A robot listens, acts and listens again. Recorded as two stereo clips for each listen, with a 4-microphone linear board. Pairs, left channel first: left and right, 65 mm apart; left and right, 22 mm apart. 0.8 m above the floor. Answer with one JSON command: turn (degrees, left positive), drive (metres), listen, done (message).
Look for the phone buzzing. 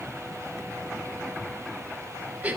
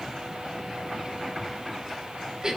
{"listen": true}
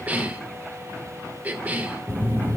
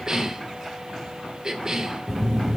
{"turn": 25}
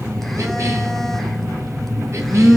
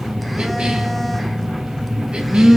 {"done": "Facing the phone buzzing, 1 to 2 m away."}